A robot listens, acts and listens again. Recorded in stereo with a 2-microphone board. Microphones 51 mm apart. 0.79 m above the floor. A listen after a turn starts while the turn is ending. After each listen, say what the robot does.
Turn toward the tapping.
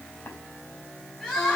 Turn 45° left.
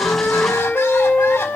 Keep listening.
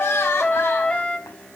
Keep listening.
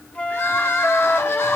I heard tapping, but can't make it out now. It was about straight ahead or 90° left.